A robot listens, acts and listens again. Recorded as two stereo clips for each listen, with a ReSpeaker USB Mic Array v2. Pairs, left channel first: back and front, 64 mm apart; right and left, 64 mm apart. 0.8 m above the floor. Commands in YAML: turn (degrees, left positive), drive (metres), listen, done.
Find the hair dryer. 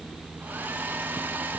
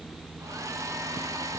turn: 60
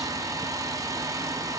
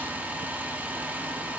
turn: 25
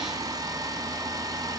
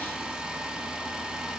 turn: 15
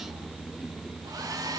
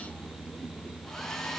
turn: -10
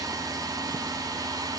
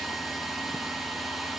done: "Facing the hair dryer."